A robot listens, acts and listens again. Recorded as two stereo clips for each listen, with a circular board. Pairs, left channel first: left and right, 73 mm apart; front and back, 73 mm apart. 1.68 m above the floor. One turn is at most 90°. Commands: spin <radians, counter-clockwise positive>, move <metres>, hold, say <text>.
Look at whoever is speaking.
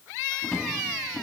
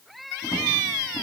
hold
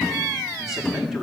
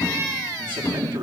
spin -1.57
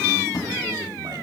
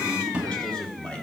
spin -1.31
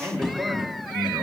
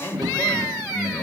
spin -0.26
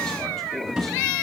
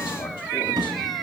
hold
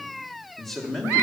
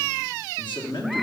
say Facing the man speaking, 2 to 4 m away.